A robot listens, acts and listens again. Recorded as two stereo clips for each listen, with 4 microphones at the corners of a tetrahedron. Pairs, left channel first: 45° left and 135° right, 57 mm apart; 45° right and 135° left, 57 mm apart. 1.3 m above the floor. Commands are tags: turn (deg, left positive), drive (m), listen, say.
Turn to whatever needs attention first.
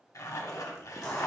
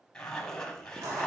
<listen/>
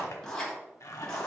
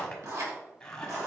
<listen/>
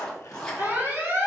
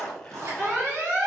<turn deg="175"/>
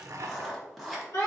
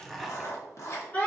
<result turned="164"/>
<turn deg="15"/>
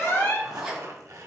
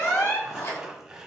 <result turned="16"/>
<say>Facing the alarm.</say>